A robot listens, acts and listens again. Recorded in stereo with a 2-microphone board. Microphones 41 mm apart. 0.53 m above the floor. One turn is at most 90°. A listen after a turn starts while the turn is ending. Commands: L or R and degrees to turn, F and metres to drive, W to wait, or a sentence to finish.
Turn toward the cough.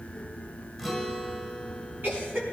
R55
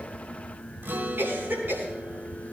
R70
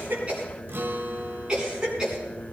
R20
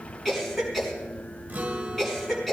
Found it: a cough, straight ahead.